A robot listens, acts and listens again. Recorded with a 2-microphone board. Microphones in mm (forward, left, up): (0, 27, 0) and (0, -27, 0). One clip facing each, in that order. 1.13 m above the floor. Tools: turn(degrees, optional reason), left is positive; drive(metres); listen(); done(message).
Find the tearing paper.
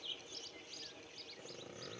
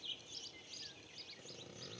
listen()
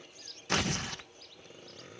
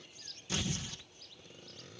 turn(degrees=60, reason="The tearing paper: about 60° left or 120° left.")
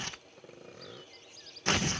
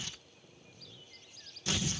turn(degrees=50, reason="So it is at 50° left.")
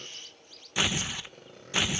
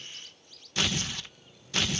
turn(degrees=15, reason="The tearing paper is now 15° left.")
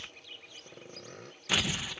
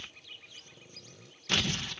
turn(degrees=10, reason="The tearing paper is now 10° left.")
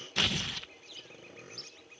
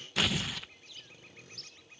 done("Found it: tearing paper, straight ahead.")